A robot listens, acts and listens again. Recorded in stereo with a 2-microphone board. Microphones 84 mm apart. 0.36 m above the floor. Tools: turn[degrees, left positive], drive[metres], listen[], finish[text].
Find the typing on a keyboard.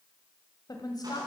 Action: listen[]
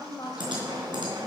Thought: The typing on a keyboard: about 65° right or 115° right.
Action: turn[-65]
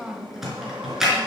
Action: finish[Found it: typing on a keyboard, straight ahead.]